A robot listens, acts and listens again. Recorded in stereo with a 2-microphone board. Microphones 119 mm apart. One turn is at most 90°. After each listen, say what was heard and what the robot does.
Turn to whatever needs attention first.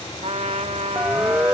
Turn 30° right.
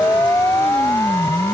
So it is at 25° left. Turn 25° left.
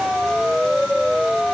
Facing the siren.